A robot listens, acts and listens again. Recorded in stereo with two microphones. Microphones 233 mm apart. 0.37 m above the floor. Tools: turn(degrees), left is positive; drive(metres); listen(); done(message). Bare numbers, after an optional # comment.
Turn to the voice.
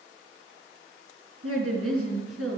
# The woman speaking: about 75° right or 105° right.
turn(-75)
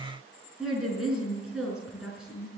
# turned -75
done("Found it: a woman speaking, straight ahead.")